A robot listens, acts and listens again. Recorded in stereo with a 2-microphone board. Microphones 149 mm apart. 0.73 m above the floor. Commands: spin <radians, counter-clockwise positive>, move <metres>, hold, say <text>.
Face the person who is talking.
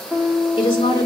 spin 0.52
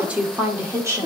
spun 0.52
spin -0.35
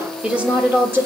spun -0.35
spin -0.26
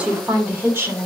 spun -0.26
spin -0.35
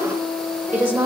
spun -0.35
spin -0.26
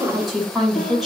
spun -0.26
say Facing the woman speaking.